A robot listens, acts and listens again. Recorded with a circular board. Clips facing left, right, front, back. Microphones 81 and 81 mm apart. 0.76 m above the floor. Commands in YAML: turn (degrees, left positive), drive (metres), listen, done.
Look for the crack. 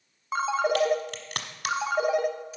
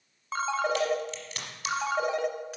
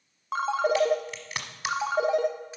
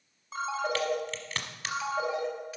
turn: 75
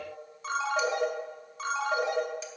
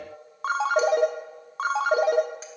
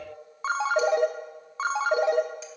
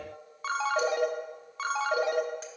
done: "I heard a crack from this way, but can't make it out now."